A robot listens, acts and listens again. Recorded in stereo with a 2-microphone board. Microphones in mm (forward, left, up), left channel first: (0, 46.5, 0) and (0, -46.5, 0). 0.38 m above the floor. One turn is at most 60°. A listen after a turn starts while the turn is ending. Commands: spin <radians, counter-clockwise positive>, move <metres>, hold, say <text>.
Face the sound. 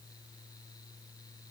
hold
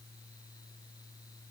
hold
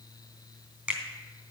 spin -0.35
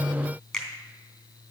say Facing the finger snap, 2 to 4 m away.